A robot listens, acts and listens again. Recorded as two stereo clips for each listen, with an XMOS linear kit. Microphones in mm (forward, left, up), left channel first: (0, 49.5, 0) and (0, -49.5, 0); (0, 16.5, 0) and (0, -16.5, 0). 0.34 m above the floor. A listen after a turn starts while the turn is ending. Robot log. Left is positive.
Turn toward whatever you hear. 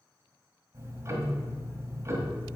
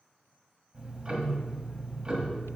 note: The ticking: about 30° right or 150° right.
cmd yaw -30
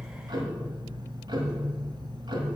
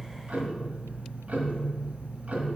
note: So it is at 110° right.
cmd yaw -110
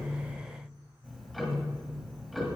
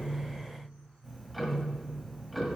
end: Found it: ticking, straight ahead, 1 to 2 m away.